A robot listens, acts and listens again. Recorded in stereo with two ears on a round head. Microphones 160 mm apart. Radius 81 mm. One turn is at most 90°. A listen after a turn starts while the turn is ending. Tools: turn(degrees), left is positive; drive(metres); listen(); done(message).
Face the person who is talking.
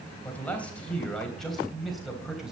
turn(degrees=-30)
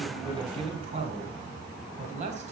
turn(degrees=-90)
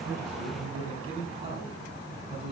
turn(degrees=-30)
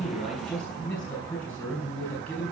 done("Found it: a man speaking, straight ahead.")